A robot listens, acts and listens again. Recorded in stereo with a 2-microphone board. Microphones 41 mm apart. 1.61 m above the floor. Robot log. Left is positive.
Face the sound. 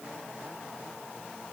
cmd idle
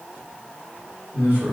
note: The man speaking: about 70° right or 110° right.
cmd yaw -70
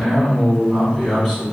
end: Facing the man speaking, 2 to 4 m away.